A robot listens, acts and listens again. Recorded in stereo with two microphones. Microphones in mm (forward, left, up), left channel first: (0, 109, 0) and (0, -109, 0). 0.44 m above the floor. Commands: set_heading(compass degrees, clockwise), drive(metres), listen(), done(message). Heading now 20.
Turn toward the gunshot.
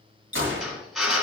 set_heading(80)
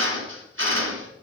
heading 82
listen()
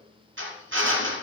done("I heard a gunshot, but can't make it out now. It was about straight ahead or 55° right.")